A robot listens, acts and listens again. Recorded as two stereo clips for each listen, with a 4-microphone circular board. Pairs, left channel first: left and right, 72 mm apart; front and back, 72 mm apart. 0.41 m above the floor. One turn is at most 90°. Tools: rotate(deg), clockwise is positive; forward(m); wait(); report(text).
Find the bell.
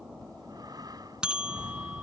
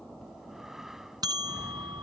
rotate(90)
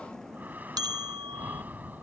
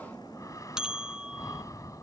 rotate(90)
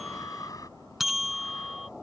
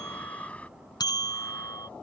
report("Facing the bell.")